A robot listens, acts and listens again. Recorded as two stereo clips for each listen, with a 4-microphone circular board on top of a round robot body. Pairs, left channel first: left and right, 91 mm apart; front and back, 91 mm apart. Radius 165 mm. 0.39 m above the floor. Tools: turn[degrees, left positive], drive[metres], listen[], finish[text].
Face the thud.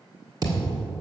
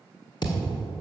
Thought: The thud: 40° right.
Action: turn[-40]
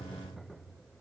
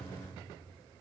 Action: finish[I heard a thud from this way, but can't make it out now.]